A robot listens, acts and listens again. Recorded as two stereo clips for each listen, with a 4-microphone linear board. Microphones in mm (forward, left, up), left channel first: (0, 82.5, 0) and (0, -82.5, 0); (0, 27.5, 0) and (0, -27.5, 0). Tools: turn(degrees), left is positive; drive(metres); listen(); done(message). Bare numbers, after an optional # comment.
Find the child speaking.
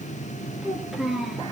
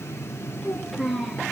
turn(30)
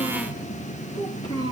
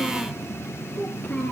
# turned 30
# So it is at 155° left.
turn(155)
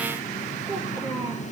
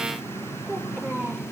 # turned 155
# The child speaking is now 30° right.
turn(-30)
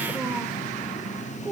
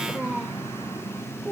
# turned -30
# The child speaking is now 15° right.
turn(-15)
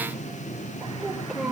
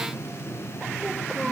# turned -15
done("Found it: a child speaking, straight ahead, over 4 m away.")